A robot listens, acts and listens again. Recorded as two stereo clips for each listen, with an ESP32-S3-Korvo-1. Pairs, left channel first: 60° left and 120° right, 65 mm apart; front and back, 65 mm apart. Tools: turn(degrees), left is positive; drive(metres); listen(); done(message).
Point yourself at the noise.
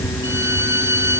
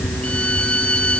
turn(degrees=-75)
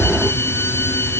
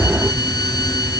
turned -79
listen()
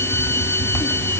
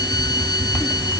done("Facing the violin.")